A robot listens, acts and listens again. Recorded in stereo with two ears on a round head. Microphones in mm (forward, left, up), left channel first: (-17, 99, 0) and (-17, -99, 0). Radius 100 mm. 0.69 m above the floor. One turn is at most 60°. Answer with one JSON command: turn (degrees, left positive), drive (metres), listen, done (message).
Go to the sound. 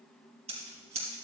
{"turn": -30}
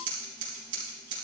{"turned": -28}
{"turn": -60}
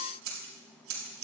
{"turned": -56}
{"turn": -60}
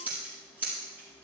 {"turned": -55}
{"drive": 1.0}
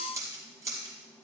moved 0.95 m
{"turn": -15}
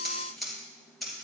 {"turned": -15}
{"drive": 1.0}
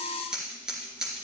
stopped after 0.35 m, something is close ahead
{"done": "Blocked. The scissors is further on, straight ahead."}